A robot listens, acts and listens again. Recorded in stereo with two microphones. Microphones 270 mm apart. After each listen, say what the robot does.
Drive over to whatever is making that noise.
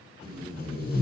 Turn 35° left.
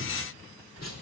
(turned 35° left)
Turn 105° left.
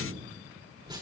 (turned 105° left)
Turn 15° right.
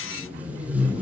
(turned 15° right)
Drive 1.0 m forward.
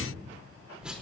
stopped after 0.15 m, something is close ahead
Something is in my way. I am facing the tape being pulled but have not reached it.